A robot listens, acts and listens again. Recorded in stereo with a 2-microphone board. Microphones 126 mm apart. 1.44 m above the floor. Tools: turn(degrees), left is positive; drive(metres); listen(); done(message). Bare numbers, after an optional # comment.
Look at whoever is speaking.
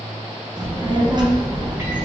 # The child speaking: about 35° right or 145° right.
turn(-35)
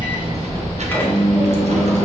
# So it is at 110° right.
turn(-110)
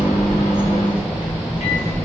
# The child speaking is now 10° right.
turn(-10)
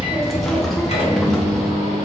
done("Found it: a child speaking, straight ahead, under 1 m away.")